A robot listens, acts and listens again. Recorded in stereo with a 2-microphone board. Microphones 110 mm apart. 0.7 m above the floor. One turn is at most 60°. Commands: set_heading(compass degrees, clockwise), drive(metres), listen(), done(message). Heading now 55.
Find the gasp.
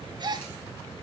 set_heading(100)
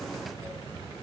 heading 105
listen()
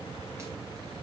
done("I heard a gasp, but can't make it out now. It was about 5° left or 85° right.")